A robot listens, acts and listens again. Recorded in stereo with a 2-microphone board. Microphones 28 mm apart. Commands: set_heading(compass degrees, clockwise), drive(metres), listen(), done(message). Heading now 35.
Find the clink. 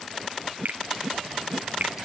listen()
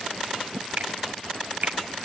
listen()
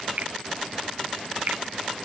done("I can't make out a clink to turn to.")